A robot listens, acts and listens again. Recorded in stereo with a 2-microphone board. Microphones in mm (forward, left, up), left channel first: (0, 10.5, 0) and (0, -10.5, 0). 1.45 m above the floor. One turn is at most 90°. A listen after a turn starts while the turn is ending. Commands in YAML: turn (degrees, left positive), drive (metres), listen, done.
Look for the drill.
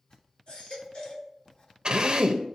turn: -45
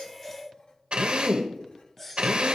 turn: -85
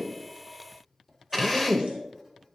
done: "Found it: a drill, straight ahead."